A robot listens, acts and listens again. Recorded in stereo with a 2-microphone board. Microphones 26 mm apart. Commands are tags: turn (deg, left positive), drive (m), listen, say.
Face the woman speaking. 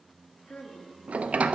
<turn deg="70"/>
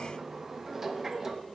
<listen/>
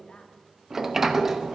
<listen/>
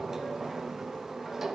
<say>I heard a woman speaking, but can't make it out now. It was about straight ahead or 40° left.</say>